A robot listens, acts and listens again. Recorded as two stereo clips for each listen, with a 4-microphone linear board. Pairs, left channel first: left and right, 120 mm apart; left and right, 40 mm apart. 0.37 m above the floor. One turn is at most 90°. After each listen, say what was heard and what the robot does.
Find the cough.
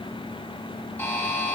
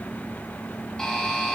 Keep listening.
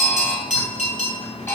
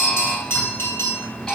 Keep listening.
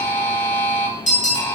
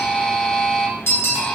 I can't make out a cough to turn to.